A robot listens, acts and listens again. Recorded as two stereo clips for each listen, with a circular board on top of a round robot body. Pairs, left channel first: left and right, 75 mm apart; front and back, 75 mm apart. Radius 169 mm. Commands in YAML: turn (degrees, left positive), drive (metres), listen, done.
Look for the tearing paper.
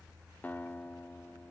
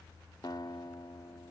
listen: true
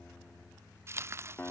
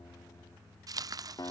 turn: -145
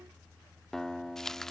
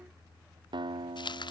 done: "Found it: tearing paper, straight ahead."